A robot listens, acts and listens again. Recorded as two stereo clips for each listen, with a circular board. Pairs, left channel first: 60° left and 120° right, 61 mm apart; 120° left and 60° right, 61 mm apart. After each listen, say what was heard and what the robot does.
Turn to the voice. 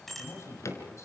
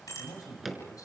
The man speaking: 100° left. Turn 100° left.
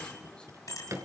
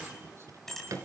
Keep listening.
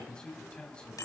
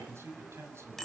The man speaking is now 15° right. Turn 15° right.
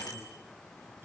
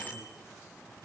Keep listening.
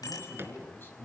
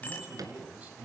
Found it: a man speaking, straight ahead.